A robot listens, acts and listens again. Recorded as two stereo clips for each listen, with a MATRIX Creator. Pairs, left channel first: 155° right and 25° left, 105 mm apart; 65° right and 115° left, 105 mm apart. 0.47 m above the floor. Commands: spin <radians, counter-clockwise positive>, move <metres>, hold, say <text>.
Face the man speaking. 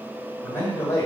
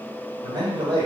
spin 2.53
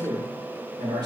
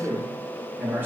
spin 0.87
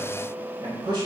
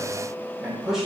spin 0.52
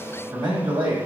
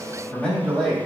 spin 0.17
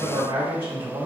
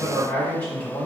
say Found it: a man speaking, straight ahead, 1 to 2 m away.